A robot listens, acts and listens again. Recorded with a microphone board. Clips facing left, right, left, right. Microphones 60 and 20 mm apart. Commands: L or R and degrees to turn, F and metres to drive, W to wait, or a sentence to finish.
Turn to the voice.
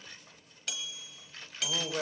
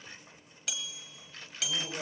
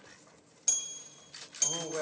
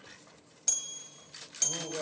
L30
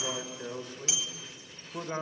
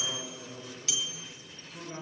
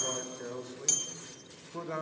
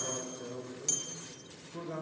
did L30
L115
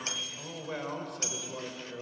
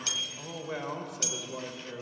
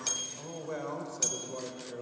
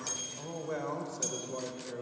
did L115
Facing the man speaking.